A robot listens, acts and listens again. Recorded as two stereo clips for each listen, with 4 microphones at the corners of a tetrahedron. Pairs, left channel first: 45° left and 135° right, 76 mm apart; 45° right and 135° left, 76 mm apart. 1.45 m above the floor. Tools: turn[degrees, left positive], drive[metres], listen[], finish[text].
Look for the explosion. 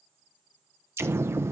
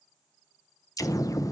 Thought: The explosion: 80° right.
Action: turn[-80]
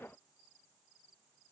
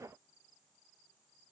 Action: finish[Facing where the explosion came from. I can't hear it now.]